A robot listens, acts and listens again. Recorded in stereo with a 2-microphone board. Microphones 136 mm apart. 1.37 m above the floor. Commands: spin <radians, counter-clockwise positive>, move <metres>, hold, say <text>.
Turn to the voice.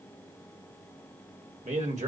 spin -1.31
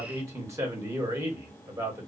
spin -0.44
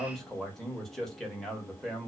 say Facing the man speaking, 1 to 2 m away.